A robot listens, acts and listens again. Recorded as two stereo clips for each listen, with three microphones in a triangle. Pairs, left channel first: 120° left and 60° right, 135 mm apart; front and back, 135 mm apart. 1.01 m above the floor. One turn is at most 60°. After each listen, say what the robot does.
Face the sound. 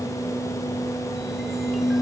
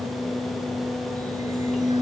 Keep listening.
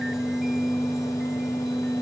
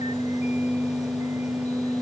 Keep listening.
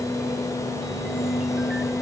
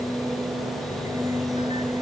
I can't make out anything.